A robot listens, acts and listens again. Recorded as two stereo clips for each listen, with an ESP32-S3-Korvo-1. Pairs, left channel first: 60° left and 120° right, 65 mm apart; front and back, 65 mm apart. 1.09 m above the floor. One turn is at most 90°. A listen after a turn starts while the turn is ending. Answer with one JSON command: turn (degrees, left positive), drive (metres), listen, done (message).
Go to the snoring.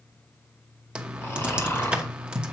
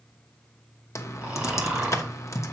{"turn": 90}
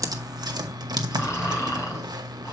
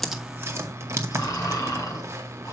{"turn": 25}
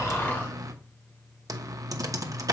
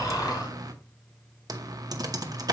{"drive": 1.0}
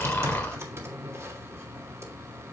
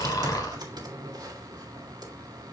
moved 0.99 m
{"drive": 1.0}
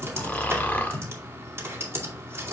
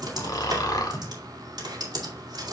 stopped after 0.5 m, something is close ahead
{"done": "I am next to the snoring."}